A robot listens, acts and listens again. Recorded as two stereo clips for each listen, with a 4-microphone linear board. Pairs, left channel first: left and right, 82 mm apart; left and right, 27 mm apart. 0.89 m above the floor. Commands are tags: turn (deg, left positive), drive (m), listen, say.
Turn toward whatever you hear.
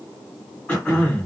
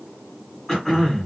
<turn deg="20"/>
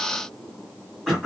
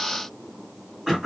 <say>Found it: throat clearing, straight ahead.</say>